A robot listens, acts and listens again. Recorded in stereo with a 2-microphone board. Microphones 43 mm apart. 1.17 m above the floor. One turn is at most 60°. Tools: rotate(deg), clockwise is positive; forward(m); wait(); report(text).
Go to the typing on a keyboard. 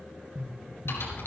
rotate(-60)
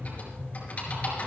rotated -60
rotate(-35)
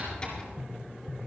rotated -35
rotate(-20)
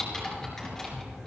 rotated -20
forward(1.0)
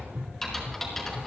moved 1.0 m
forward(1.0)
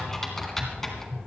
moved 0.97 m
forward(1.0)
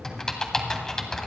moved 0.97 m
rotate(-10)
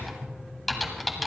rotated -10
forward(1.0)
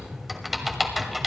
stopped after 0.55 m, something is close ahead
report("I am next to the typing on a keyboard.")